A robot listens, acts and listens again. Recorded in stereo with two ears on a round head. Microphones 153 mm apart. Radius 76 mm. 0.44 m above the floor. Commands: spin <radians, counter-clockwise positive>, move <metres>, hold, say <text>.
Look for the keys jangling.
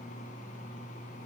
hold
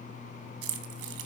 spin -1.22
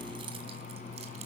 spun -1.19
hold
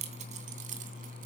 spin -0.79
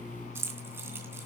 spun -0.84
spin -0.26
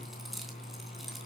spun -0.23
hold
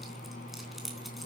say Found it: keys jangling, straight ahead, 2 to 4 m away.